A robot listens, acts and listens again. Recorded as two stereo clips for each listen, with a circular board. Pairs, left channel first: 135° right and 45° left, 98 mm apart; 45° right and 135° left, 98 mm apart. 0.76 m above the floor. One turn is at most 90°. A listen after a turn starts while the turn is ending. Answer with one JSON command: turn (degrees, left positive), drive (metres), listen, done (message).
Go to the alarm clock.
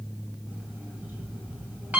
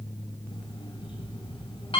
{"turn": -30}
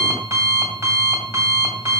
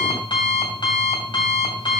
{"turn": -10}
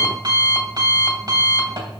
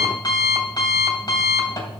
{"drive": 1.0}
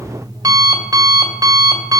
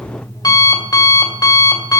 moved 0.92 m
{"drive": 1.0}
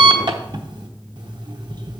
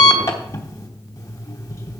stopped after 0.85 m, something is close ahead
{"turn": 10}
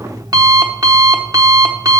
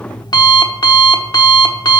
{"done": "I am next to the alarm clock."}